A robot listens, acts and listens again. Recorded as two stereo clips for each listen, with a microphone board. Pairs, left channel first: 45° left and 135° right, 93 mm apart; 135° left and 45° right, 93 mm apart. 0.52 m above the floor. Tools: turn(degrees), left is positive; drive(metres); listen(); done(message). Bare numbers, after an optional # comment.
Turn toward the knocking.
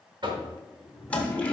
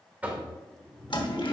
# The knocking: 115° right.
turn(-115)
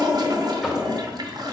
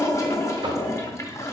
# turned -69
# Nothing new. It was at 45° right.
turn(-45)
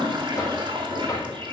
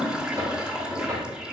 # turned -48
listen()
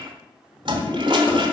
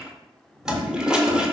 done("Facing where the knocking came from. I can't hear it now.")